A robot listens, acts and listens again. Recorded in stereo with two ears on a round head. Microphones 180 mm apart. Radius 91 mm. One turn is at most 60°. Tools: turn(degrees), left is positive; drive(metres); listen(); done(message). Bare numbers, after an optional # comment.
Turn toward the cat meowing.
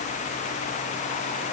listen()
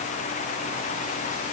listen()
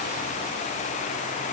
done("I can't make out a cat meowing.")